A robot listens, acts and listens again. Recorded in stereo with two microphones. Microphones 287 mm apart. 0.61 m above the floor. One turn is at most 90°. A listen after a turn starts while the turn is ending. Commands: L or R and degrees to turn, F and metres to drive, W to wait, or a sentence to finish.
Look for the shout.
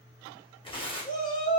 R30
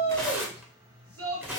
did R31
R90
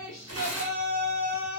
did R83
R30
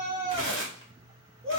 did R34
Found it: a shout, straight ahead.